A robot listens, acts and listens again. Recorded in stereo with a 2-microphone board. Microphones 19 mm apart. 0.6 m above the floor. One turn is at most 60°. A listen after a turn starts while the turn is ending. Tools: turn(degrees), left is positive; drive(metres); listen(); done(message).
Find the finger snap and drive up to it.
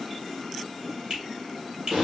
turn(degrees=-45)
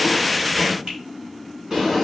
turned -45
listen()
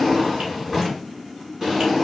listen()
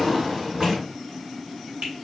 turn(degrees=-60)
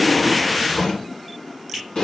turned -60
turn(degrees=-20)
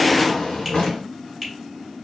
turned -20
drive(metres=1.0)
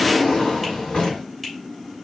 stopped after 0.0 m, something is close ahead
listen()
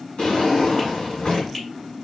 listen()
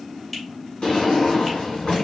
done("Facing where the finger snap came from. I can't hear it now. I did not reach it.")